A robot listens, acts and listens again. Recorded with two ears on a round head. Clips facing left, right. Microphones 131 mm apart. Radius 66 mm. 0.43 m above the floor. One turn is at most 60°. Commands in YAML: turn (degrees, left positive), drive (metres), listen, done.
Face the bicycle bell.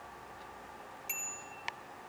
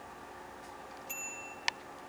turn: 60
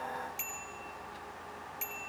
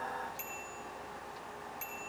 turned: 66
turn: 20
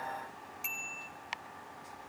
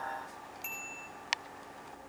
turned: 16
done: "Facing the bicycle bell, over 4 m away."